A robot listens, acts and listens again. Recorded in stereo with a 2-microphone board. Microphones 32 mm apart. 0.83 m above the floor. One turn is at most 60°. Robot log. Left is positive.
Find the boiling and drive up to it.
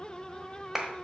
cmd idle
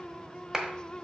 cmd idle
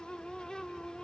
end: I can't make out boiling, only a clap.